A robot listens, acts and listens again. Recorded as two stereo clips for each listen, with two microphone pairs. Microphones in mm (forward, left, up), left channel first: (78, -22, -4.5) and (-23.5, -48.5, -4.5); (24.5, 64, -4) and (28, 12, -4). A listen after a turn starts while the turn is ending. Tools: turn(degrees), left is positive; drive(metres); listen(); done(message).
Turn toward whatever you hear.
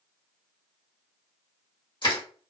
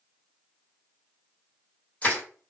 turn(degrees=35)
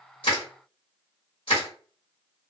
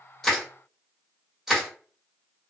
done("Facing the crushing, 2 to 4 m away.")